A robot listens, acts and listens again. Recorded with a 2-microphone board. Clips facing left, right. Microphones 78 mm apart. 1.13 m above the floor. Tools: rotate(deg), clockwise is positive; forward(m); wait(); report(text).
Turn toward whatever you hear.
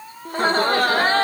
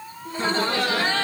rotate(-40)
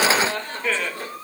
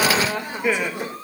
rotate(20)
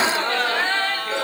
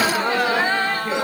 rotate(15)
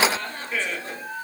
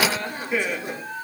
rotate(15)
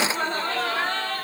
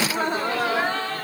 rotate(15)
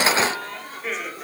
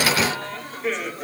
report("Found it: laughter, straight ahead, 2 to 4 m away.")